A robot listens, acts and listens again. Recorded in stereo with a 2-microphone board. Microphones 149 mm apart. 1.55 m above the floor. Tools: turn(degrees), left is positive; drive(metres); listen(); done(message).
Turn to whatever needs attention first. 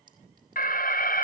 turn(degrees=75)
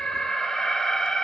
done("Found it: an alarm, straight ahead.")